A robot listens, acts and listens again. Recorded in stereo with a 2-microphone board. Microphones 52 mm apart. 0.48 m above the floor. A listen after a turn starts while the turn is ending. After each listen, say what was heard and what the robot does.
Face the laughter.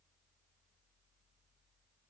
Keep listening.
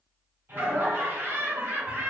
The laughter: about 45° right or 135° right. Turn 45° right.
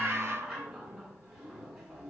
So it is at 10° right. Turn 10° right.
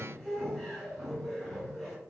Facing the laughter.